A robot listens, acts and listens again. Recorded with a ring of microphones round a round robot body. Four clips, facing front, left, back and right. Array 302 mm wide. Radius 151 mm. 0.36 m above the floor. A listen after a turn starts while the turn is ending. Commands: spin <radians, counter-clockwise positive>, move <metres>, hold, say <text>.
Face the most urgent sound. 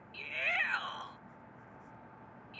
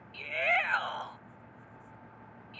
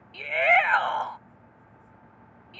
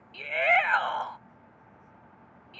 spin -2.71
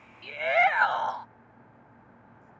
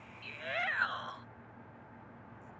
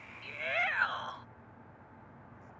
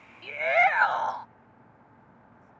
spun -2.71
spin -0.87
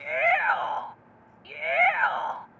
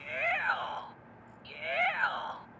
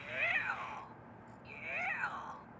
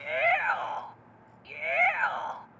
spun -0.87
spin -0.26
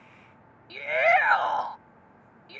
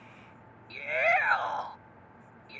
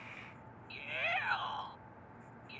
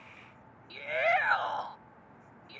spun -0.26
say Found it: a shout, straight ahead.